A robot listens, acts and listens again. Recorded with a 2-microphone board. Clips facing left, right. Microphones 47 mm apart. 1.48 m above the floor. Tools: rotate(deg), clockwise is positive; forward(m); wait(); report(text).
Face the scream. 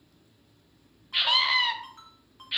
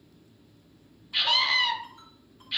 rotate(-30)
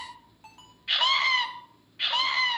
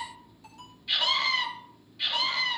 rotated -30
rotate(-135)
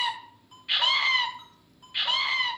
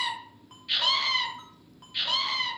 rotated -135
rotate(-30)
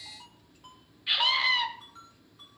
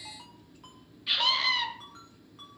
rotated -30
rotate(-15)
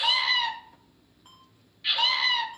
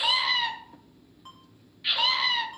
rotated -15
report("Facing the scream.")